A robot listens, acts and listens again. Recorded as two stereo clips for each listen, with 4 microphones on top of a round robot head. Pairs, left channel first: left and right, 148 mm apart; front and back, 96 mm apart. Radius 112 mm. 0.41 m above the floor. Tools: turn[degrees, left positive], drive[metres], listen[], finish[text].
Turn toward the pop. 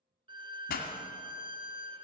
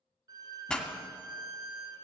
Thought: The pop: 80° left.
Action: turn[80]
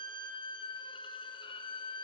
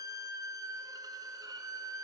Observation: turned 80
Action: finish[I heard a pop from this way, but can't make it out now.]